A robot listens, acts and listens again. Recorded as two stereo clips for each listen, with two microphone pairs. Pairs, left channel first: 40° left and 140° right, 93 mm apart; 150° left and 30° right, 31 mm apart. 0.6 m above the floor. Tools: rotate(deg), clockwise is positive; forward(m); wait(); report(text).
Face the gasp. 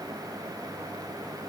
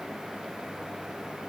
wait()
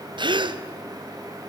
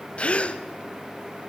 rotate(170)
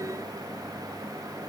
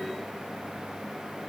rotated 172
report("Facing where the gasp came from. I can't hear it now.")